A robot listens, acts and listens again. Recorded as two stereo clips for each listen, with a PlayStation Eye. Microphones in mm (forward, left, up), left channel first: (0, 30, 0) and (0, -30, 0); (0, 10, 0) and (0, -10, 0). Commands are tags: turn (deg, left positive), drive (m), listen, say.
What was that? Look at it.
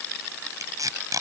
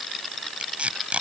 <turn deg="-90"/>
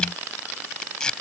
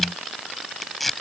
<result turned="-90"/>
<turn deg="15"/>
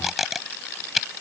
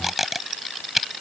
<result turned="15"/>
<say>Found it: tape being pulled, straight ahead.</say>